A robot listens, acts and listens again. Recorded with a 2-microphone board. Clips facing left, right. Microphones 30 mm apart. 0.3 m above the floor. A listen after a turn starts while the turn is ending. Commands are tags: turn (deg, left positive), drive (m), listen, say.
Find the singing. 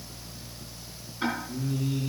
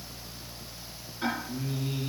<turn deg="-40"/>
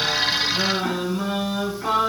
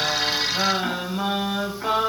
<turn deg="-30"/>
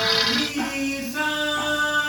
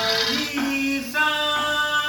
<turn deg="-40"/>
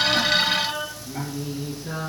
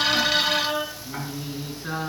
<turn deg="-120"/>
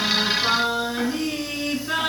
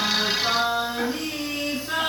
<turn deg="15"/>
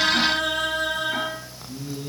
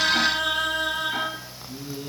<say>Found it: singing, straight ahead.</say>